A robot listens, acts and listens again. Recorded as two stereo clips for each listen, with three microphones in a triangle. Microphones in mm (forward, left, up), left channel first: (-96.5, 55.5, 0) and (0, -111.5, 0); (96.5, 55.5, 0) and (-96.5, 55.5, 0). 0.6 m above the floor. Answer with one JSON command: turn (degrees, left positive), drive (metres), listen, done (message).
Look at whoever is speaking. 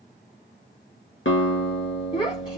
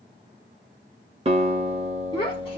{"turn": 60}
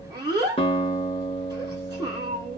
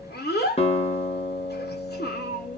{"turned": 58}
{"done": "Found it: a child speaking, straight ahead."}